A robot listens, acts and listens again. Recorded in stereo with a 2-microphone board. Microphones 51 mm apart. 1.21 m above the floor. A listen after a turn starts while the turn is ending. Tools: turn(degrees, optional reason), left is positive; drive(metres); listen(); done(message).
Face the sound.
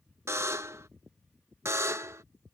turn(degrees=-65, reason="The buzzer: about 65° right or 115° right.")
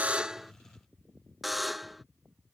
done("Found it: a buzzer, straight ahead.")